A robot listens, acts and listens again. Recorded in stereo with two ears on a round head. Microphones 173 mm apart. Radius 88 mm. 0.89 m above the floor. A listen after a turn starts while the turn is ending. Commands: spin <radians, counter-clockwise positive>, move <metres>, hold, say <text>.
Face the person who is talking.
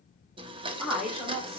spin 0.52
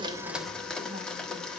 hold
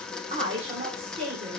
spin -0.52
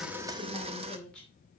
say Found it: a woman speaking, straight ahead.